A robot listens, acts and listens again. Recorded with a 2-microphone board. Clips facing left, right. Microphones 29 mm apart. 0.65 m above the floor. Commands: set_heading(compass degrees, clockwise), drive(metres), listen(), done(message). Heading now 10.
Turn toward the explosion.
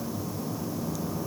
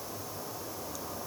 listen()
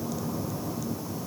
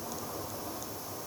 listen()
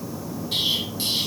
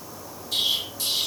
set_heading(325)
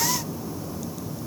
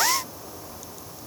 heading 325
listen()
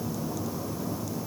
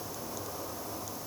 done("I heard an explosion, but can't make it out now. It was about straight ahead or 90° left.")